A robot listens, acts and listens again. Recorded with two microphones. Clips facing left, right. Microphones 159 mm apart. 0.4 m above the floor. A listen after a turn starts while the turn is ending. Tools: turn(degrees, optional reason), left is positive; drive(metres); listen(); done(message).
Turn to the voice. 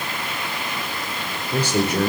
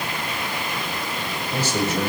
turn(degrees=55, reason="The man speaking: about 55° left or 125° left.")
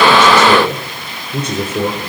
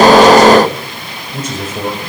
turn(degrees=65, reason="So it is at 65° left.")
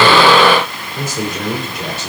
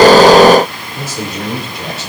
done("Facing the man speaking.")